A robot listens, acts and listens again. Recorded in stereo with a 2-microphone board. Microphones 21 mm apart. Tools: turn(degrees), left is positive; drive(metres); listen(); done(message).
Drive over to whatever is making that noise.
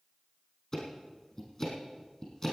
turn(degrees=25)
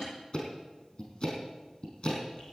turn(degrees=130)
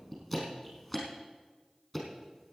drive(metres=1.0)
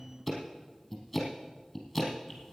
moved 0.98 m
drive(metres=1.0)
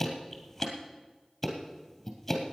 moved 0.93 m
drive(metres=1.0)
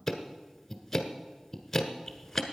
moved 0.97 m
turn(degrees=15)
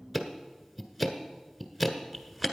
drive(metres=1.0)
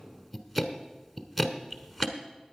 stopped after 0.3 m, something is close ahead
done("Arrived at the ticking, straight ahead.")